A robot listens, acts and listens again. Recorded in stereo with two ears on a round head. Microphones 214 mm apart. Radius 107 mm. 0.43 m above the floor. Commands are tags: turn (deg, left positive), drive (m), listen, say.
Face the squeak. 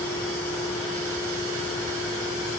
<listen/>
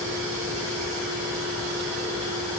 <listen/>
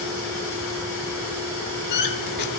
<turn deg="45"/>
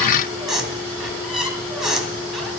<say>Facing the squeak, 1 to 2 m away.</say>